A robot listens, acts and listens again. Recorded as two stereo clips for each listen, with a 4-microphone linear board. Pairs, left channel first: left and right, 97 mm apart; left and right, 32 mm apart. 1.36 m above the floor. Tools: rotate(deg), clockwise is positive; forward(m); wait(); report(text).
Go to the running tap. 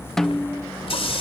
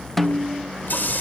rotate(-70)
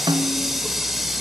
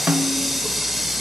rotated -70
forward(1.0)
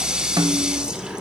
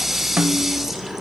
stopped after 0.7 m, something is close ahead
rotate(10)
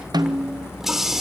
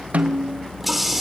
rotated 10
report("Something is in my way. I am facing the running tap but have not reached it.")